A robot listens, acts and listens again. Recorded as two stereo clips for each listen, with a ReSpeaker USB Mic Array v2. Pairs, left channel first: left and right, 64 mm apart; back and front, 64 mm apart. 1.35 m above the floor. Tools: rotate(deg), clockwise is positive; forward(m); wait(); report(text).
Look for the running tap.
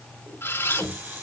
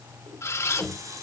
rotate(25)
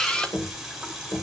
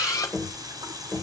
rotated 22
report("Facing the running tap.")